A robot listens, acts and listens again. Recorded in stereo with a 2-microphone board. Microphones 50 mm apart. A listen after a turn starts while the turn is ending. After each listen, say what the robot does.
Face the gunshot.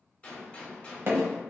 Turn 25° left.
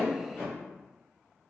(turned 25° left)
Keep listening.
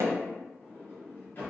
I heard a gunshot, but can't make it out now. It was about straight ahead or 130° left.